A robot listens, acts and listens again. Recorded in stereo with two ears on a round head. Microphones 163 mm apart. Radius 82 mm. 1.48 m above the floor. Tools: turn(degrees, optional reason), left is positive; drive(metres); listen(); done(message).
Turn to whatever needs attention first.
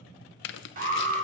turn(degrees=-45, reason="The alarm: about 45° right or 135° right.")
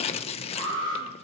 turn(degrees=-90, reason="So it is at 90° right.")
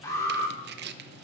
turn(degrees=15, reason="The alarm is now 15° left.")
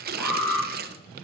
done("Found it: an alarm, straight ahead, 2 to 4 m away.")